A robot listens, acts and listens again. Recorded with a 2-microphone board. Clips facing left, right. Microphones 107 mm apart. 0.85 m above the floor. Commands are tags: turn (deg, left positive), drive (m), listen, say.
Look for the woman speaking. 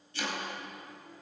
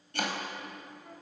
<listen/>
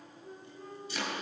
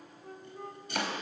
<listen/>
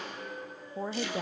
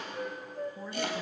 <turn deg="70"/>
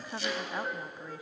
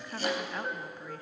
<turn deg="15"/>
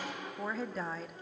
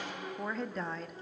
<say>Facing the woman speaking, under 1 m away.</say>